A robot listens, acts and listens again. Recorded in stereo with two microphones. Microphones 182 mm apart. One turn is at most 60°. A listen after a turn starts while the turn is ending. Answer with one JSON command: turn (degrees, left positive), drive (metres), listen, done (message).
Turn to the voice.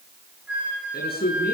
{"turn": 60}
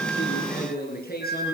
{"turn": 55}
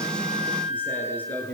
{"turn": 10}
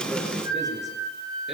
{"listen": true}
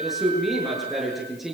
{"done": "Facing the man speaking, over 4 m away."}